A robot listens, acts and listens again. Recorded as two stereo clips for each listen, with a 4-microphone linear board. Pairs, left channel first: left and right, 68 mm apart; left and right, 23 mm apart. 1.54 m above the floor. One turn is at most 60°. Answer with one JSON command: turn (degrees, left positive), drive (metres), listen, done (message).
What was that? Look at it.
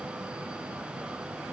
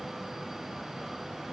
{"listen": true}
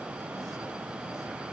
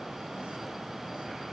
{"listen": true}
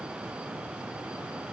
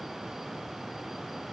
{"done": "I can't make out anything."}